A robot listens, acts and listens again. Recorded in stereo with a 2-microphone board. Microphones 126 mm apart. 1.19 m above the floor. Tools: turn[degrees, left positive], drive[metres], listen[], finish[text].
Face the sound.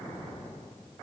Action: listen[]
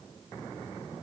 Action: listen[]
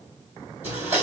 Action: turn[-30]
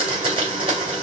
Thought: So it is at 130° right.
Action: turn[-130]
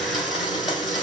Action: finish[Facing the blender, 2 to 4 m away.]